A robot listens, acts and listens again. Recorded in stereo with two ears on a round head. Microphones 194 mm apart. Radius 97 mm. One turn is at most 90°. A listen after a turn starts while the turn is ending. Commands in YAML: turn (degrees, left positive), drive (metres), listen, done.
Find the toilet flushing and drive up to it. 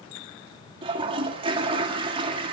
turn: -25
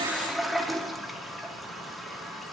drive: 1.0
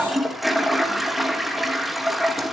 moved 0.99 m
drive: 1.0
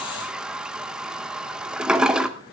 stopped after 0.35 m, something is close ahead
done: "Arrived at the toilet flushing, straight ahead."